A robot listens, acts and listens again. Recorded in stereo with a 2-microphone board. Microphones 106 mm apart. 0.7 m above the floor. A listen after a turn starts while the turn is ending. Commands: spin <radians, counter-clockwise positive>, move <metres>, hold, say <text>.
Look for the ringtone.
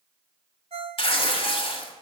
spin -1.57
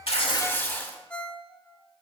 spin 0.17
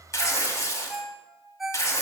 say Found it: a ringtone, straight ahead.